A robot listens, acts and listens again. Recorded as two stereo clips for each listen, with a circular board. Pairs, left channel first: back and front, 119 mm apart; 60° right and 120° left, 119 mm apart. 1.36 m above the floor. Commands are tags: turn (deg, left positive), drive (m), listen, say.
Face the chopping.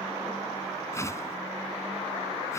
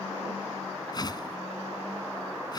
<listen/>
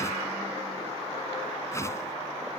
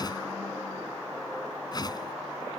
<listen/>
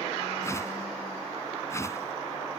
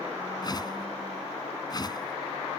<say>I can't make out chopping, only a whoosh.</say>